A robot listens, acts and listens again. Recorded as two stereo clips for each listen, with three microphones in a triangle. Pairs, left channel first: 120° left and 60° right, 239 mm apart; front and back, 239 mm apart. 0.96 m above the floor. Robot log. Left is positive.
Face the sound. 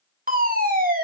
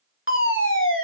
note: The fire alarm: 15° right.
cmd yaw -15
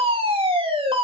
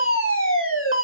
end: Facing the fire alarm.